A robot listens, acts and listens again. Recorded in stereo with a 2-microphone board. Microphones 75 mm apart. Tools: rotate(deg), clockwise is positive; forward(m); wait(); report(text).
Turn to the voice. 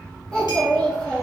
rotate(-30)
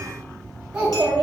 rotate(15)
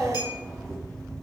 report("Facing the child speaking, 1 to 2 m away.")